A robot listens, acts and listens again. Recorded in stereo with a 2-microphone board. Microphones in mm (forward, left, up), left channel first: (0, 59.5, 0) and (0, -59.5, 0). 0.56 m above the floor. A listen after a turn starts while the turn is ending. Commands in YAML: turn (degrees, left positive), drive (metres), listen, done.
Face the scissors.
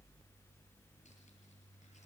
listen: true
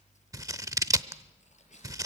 turn: -30
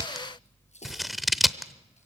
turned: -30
done: "Facing the scissors, under 1 m away."